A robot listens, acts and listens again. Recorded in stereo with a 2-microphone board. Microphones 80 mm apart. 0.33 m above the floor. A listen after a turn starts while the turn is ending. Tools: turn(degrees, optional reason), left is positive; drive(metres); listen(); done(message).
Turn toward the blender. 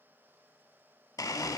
turn(degrees=45, reason="The blender: about 45° left or 135° left.")
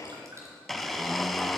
done("Facing the blender.")